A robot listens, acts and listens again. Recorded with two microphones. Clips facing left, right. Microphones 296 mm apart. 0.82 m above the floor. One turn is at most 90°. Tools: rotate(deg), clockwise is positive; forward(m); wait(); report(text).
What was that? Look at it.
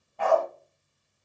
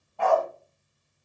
rotate(-20)
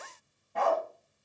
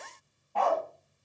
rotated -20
rotate(-20)
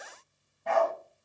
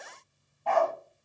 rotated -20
rotate(-20)
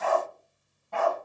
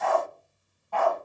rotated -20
rotate(-25)
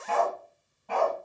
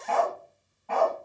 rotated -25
rotate(-90)
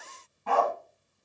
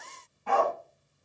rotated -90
rotate(-45)
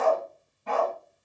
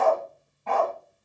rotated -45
rotate(-15)
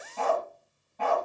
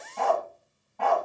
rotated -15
report("Found it: a dog barking, straight ahead, 2 to 4 m away.")